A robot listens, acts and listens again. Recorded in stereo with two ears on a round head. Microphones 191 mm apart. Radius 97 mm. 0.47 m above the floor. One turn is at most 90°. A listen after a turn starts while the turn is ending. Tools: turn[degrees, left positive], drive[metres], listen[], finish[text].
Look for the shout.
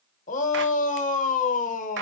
Thought: The shout: about 35° left or 145° left.
Action: turn[35]
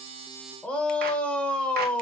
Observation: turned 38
Action: finish[Found it: a shout, straight ahead.]